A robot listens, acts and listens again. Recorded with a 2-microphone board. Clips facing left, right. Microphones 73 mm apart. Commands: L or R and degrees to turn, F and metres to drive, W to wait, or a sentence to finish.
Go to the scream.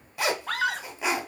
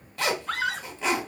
L55
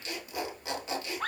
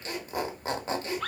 L40
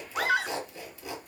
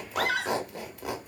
L20
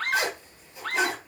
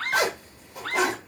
F1.0
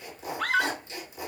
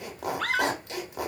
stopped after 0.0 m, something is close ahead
Blocked. The scream is further on, straight ahead.